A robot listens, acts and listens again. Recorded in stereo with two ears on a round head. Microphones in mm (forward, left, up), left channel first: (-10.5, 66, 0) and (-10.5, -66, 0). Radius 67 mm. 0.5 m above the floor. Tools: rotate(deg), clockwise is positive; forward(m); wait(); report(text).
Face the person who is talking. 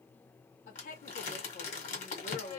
rotate(-55)
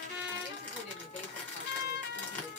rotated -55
wait()
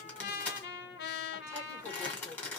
rotate(-55)
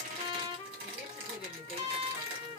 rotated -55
wait()
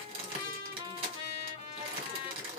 wait()
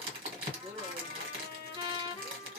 report("Found it: a woman speaking, straight ahead, 1 to 2 m away.")